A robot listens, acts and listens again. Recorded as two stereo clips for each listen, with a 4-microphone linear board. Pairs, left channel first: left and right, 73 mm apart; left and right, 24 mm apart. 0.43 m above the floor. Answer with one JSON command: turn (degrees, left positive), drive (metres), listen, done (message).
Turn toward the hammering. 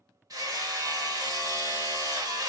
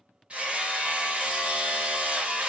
{"turn": -60}
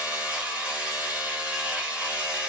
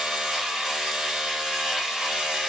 {"turn": -20}
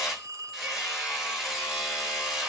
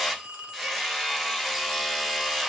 {"done": "Facing the hammering."}